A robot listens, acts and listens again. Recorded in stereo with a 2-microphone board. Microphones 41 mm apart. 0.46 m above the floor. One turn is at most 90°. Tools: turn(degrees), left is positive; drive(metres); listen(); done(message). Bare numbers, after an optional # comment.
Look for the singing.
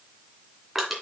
listen()
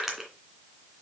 listen()
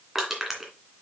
done("I can't make out singing to turn to.")